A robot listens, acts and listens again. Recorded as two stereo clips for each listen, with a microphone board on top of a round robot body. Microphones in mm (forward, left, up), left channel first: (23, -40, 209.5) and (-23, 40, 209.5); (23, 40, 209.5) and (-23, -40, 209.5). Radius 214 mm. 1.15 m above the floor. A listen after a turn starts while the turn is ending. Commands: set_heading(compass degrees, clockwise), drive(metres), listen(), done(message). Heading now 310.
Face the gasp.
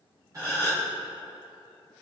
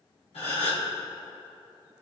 set_heading(245)
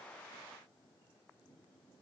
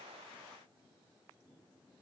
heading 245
done("Facing where the gasp came from. I can't hear it now.")